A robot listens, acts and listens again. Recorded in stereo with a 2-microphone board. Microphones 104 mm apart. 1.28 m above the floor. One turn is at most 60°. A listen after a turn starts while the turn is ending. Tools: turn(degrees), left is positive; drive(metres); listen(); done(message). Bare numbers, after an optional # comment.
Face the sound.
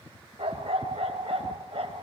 # The dog barking: about 65° right or 115° right.
turn(-60)
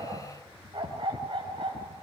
# So it is at 55° right.
turn(-55)
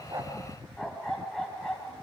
done("Found it: a dog barking, straight ahead, 2 to 4 m away.")